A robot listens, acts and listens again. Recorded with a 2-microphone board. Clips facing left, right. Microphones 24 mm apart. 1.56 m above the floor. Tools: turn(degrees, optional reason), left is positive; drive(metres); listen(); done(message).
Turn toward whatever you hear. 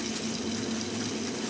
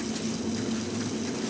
listen()
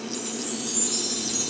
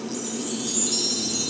turn(degrees=-40, reason="The chime: about 40° right or 140° right.")
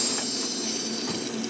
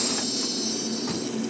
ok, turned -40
turn(degrees=-95, reason="So it is at 95° right.")
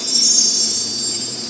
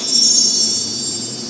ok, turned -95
turn(degrees=-30, reason="The chime is now 30° right.")
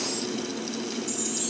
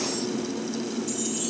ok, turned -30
listen()
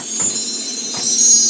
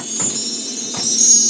done("Found it: a chime, straight ahead.")